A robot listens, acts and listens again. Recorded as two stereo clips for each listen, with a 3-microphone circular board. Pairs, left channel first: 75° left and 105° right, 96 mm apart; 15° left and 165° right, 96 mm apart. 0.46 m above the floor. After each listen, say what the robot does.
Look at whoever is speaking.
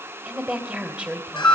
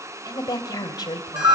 Turn 25° right.
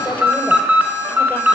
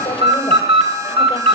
Keep listening.
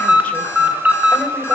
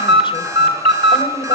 Keep listening.
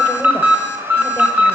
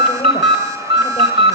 Facing where the woman speaking came from. I can't hear it now.